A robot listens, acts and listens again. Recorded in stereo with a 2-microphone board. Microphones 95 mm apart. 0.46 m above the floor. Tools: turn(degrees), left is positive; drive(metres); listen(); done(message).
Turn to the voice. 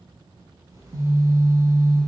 listen()
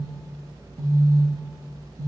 listen()
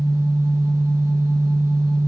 done("I can't make out anyone speaking to turn to.")